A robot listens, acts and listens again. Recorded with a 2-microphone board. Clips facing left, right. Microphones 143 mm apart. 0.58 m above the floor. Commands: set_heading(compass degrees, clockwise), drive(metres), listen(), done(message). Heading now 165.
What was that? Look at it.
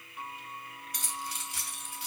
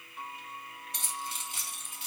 set_heading(190)
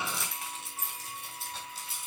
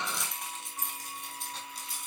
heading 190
done("Found it: keys jangling, straight ahead, 2 to 4 m away.")